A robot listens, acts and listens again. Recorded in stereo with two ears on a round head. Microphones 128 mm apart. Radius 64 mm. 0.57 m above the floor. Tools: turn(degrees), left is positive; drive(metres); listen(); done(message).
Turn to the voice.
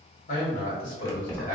turn(degrees=60)
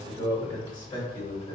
turn(degrees=40)
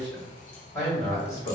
turn(degrees=20)
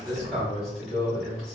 done("Found it: a man speaking, straight ahead.")